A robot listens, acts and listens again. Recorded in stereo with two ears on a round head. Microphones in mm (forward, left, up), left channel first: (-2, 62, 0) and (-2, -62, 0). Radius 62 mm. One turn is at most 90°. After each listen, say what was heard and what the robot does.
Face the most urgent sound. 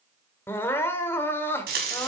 The crying: about 15° left or 165° left. Turn 15° left.
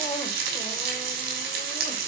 Keep listening.
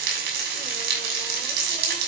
Keep listening.
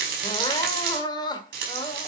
So it is at 150° left. Turn 90° left.
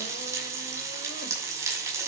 Nothing new. It was at 60° left. Turn 60° left.
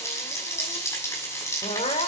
The crying is now 40° left. Turn 40° left.
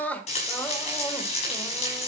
The crying is now 10° left. Turn 10° left.
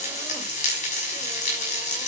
Keep listening.
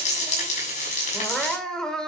Facing the crying.